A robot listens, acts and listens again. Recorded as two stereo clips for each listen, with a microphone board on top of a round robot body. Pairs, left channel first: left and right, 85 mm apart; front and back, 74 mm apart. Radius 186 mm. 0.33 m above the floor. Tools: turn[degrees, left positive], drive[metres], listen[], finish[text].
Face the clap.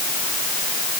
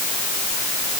Action: listen[]
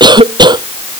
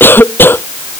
Action: listen[]
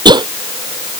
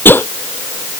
Action: finish[I can't make out a clap to turn to.]